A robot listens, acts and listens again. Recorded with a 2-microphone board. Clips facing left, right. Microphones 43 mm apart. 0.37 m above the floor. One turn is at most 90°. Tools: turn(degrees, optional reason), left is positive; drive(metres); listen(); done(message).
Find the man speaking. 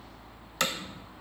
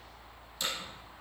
listen()
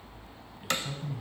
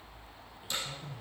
turn(degrees=30, reason="The man speaking: about 30° left or 150° left.")
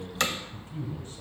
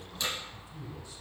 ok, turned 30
turn(degrees=40, reason="The man speaking: about 40° left or 140° left.")
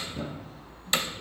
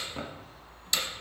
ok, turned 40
listen()
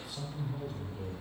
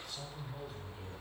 turn(degrees=-10, reason="So it is at 10° right.")
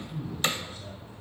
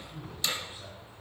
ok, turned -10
turn(degrees=-25, reason="The man speaking is now 25° right.")
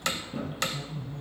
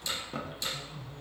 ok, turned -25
turn(degrees=-10, reason="The man speaking is now 10° right.")
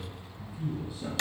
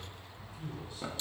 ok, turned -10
done("Facing the man speaking.")